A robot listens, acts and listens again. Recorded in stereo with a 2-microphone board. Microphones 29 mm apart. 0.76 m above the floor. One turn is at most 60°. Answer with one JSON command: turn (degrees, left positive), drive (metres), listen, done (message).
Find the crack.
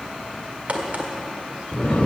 {"turn": -50}
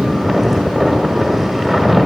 {"listen": true}
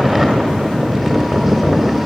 {"done": "I heard a crack, but can't make it out now. It was about straight ahead or 80° right."}